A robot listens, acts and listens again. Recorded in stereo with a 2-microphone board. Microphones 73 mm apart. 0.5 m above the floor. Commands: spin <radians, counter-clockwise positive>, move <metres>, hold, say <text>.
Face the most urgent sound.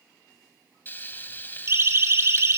spin -0.61
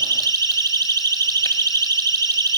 spin -1.92
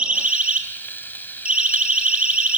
spin -0.26
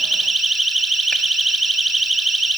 say Facing the siren.